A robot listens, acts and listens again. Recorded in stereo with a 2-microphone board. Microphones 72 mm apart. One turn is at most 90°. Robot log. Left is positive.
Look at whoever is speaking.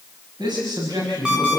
cmd yaw -90
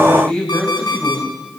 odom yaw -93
note: So it is at 10° left.
cmd yaw +10
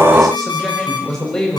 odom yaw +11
end: Facing the man speaking, over 4 m away.